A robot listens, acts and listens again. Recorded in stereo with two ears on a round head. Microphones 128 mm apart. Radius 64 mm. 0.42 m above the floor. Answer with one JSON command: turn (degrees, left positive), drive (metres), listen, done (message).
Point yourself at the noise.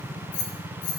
{"turn": 55}
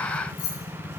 {"turn": 70}
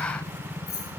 {"turn": 10}
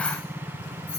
{"done": "Facing the keys jangling."}